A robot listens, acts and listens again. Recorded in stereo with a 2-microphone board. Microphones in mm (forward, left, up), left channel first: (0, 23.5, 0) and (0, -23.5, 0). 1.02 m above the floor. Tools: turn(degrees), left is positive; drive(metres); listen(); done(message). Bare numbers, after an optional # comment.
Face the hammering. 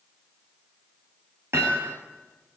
# The hammering: about 60° right or 120° right.
turn(-60)
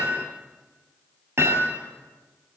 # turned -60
# So it is at 65° right.
turn(-65)
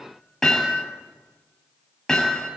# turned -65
done("Found it: hammering, straight ahead.")